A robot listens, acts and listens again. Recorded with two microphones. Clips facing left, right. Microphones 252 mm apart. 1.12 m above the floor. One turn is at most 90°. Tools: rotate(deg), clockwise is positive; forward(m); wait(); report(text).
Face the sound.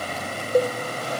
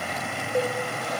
rotate(-45)
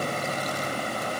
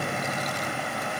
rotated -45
wait()
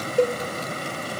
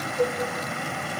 rotate(-85)
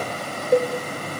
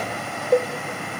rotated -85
report("Found it: a cowbell, straight ahead.")